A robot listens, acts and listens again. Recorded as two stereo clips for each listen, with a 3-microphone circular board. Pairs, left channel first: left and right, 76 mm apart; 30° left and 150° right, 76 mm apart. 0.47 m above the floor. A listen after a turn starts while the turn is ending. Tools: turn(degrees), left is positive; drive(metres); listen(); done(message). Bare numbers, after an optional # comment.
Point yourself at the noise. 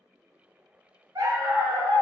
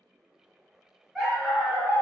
# The dog barking: 80° right.
turn(-80)
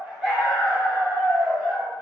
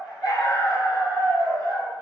# The dog barking is now 20° left.
turn(20)
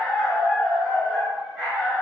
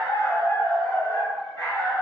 # The dog barking is now 10° right.
turn(-10)
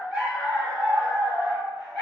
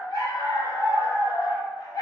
done("Found it: a dog barking, straight ahead.")